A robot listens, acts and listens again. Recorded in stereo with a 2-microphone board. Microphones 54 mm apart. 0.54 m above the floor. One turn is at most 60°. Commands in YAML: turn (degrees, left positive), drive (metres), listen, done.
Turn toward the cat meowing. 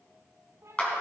turn: -60
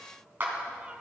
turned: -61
listen: true
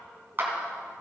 listen: true
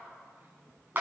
done: "I heard a cat meowing, but can't make it out now. It was about 5° left or 60° right."